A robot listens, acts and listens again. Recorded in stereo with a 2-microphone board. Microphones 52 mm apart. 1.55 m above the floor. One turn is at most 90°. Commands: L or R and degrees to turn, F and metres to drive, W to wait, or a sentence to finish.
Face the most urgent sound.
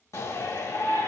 L75
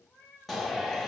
Found it: a shout, straight ahead.